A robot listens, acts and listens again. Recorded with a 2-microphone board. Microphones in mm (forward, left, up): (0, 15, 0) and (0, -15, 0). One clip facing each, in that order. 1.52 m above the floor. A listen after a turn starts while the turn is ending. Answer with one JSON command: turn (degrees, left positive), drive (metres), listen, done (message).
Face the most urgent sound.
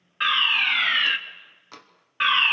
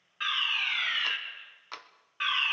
{"turn": 35}
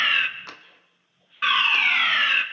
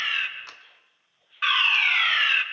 {"done": "Facing the fire alarm, 1 to 2 m away."}